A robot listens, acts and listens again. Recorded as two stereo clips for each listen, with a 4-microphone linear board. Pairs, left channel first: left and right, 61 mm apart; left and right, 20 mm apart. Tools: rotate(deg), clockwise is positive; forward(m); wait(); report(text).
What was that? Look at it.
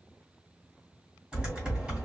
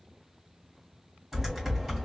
rotate(15)
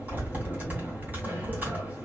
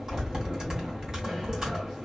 rotate(150)
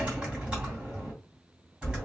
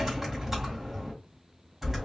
rotate(20)
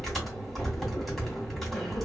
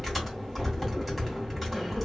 report("Found it: typing on a keyboard, straight ahead, 2 to 4 m away.")